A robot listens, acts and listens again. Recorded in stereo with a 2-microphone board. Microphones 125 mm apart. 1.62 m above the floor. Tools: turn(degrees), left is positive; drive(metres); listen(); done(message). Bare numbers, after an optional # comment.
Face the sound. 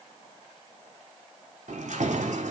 # The keys jangling: about 70° right or 110° right.
turn(-70)
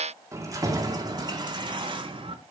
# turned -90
# So it is at 45° right.
turn(-45)
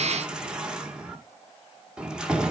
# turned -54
done("Facing the keys jangling.")